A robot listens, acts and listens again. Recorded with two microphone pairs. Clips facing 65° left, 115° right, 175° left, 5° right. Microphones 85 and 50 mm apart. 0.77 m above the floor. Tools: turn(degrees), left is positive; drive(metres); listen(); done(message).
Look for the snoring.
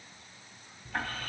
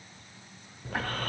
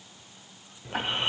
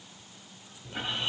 turn(degrees=-130)
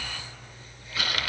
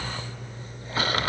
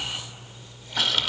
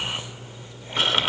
turn(degrees=-60)
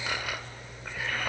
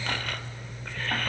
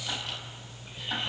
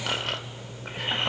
turn(degrees=-10)
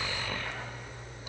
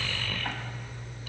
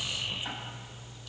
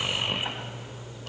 done("Found it: snoring, straight ahead, under 1 m away.")